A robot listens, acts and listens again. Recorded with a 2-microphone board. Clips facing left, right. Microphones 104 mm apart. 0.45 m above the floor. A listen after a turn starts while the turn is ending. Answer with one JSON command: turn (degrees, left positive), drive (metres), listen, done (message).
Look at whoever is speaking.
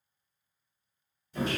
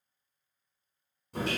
{"listen": true}
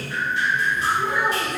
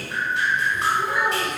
{"turn": -30}
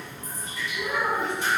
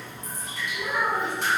{"done": "Facing the child speaking."}